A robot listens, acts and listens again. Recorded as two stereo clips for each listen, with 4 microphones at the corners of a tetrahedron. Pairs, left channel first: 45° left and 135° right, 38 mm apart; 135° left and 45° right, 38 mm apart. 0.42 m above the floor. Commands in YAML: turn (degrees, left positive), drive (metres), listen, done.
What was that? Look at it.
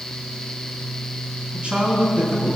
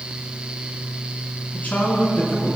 turn: 180
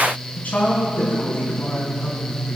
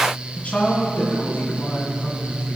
turn: 100
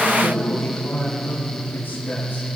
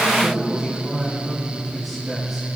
turn: 40
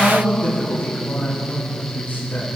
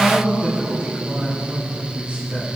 turn: 15
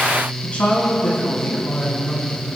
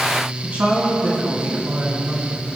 done: "Found it: a man speaking, straight ahead."